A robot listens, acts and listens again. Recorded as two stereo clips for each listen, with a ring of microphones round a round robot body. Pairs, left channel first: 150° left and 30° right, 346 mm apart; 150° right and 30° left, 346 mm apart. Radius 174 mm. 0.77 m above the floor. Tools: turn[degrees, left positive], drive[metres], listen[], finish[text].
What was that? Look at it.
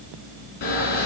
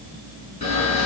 Thought: The camera shutter: 140° left.
Action: turn[140]
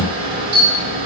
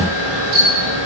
Thought: The camera shutter is now 45° left.
Action: turn[45]
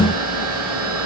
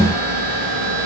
Thought: The camera shutter is now 15° left.
Action: turn[15]
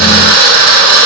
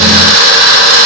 Thought: The camera shutter is now 10° left.
Action: turn[10]
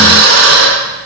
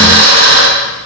Action: finish[Found it: a camera shutter, straight ahead.]